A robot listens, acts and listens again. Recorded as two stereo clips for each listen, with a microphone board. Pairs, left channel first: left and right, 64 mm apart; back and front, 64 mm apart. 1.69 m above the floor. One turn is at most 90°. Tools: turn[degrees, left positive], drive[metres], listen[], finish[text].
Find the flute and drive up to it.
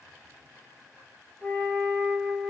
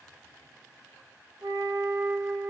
Action: drive[1.0]
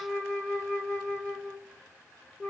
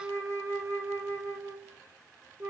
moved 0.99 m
Thought: The flute is now 15° left.
Action: turn[15]
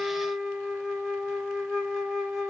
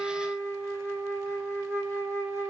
Action: drive[1.0]
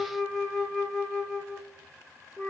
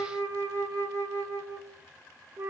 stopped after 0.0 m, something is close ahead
Action: finish[I am next to the flute.]